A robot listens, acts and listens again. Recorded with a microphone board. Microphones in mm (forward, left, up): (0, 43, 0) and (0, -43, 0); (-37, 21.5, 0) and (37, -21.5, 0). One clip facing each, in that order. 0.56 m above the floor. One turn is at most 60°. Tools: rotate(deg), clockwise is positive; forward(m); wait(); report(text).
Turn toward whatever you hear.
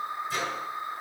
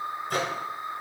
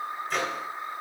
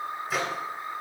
rotate(60)
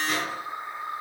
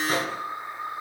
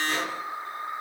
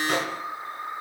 rotate(40)
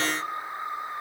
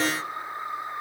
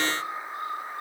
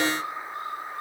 wait()
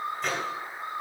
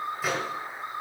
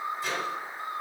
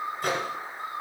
report("Found it: a microwave, straight ahead.")